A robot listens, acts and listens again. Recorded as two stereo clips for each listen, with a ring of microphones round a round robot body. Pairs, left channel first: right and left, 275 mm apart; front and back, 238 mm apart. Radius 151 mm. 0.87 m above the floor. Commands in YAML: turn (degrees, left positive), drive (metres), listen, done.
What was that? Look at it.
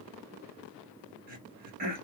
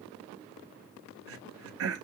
turn: 150
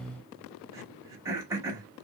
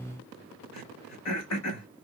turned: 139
turn: 10
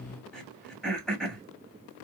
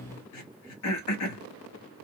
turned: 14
done: "Facing the throat clearing, 1 to 2 m away."